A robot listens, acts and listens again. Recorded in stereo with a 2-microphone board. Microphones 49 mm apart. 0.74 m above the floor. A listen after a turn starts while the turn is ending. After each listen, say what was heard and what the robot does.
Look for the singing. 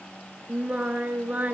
The singing: about 35° right or 145° right. Turn 35° right.
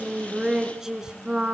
So it is at 15° right. Turn 15° right.
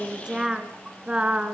The singing is now 25° right. Turn 25° right.
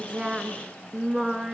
The singing is now 10° right. Turn 10° right.
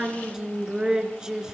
The singing is now 10° right. Turn 10° right.
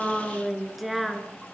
Facing the singing.